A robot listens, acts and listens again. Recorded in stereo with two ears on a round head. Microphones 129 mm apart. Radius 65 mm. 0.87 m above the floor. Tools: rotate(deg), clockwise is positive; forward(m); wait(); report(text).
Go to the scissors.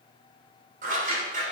rotate(60)
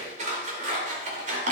rotate(55)
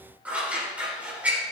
rotate(10)
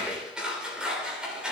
forward(1.0)
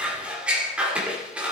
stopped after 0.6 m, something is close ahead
rotate(10)
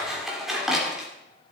report("Blocked. The scissors is further on, straight ahead.")